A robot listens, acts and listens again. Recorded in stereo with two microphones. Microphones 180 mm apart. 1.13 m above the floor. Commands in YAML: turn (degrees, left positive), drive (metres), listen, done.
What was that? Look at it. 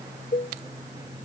turn: 65
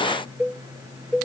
done: "Facing the cowbell."